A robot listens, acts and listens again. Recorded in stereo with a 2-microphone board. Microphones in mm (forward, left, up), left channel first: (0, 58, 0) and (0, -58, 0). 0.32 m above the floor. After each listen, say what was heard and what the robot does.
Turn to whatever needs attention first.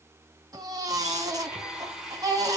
The baby crying: about 35° right or 145° right. Turn 35° right.
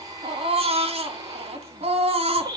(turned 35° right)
So it is at 110° right. Turn 110° right.
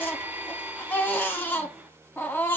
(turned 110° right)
The baby crying is now 20° left. Turn 20° left.
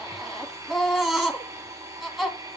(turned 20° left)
Found it: a baby crying, straight ahead.